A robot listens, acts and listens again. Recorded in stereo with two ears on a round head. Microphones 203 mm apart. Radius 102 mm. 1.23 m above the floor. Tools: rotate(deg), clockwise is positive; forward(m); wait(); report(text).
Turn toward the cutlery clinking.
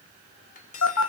rotate(-40)
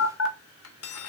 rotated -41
rotate(-100)
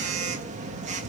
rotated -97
wait()
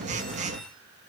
report("Facing the cutlery clinking.")